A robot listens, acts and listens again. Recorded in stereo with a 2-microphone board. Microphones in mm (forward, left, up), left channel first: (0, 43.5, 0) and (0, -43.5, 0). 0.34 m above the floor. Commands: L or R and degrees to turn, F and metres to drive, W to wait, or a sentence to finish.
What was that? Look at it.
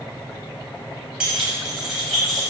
L30
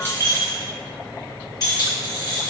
L125
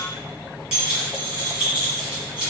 R15
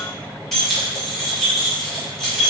Found it: keys jangling, straight ahead, 2 to 4 m away.